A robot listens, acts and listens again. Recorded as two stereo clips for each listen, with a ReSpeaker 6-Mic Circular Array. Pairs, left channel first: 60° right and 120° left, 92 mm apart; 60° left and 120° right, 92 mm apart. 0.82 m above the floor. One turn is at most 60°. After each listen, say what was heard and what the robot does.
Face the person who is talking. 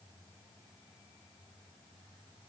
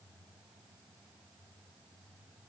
Keep listening.
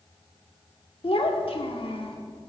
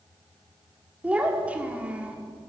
The child speaking: 45° right. Turn 45° right.
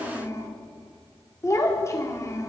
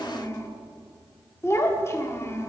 Found it: a child speaking, straight ahead, 1 to 2 m away.